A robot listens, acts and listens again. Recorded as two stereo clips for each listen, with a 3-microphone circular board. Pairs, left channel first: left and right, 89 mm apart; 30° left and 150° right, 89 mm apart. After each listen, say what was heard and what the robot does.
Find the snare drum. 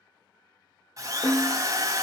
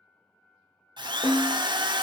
The snare drum: 45° left. Turn 45° left.
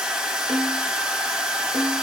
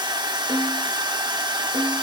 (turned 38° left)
Found it: a snare drum, straight ahead, 1 to 2 m away.